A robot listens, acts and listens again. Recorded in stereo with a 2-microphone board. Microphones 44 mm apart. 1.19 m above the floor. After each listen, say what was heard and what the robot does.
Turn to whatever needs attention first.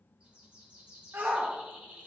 The shout: about 60° right or 120° right. Turn 60° right.
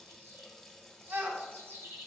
So it is at 50° right. Turn 50° right.
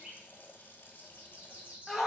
Found it: a shout, straight ahead.